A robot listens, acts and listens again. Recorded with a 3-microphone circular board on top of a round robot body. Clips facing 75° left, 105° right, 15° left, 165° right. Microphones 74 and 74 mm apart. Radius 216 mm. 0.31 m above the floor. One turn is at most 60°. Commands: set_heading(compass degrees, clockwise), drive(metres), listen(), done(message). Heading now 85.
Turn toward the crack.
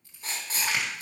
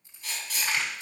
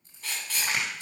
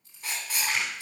done("Facing the crack.")